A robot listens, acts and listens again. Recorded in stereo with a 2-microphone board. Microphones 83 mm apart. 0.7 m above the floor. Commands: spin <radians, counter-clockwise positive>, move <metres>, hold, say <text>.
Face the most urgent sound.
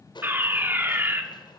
spin -0.44
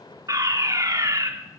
spin -2.18
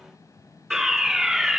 say Facing the fire alarm, 2 to 4 m away.